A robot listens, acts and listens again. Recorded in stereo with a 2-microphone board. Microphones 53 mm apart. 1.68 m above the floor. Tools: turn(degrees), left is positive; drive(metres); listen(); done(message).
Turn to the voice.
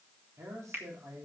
turn(degrees=-65)
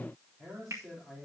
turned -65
done("Facing the man speaking.")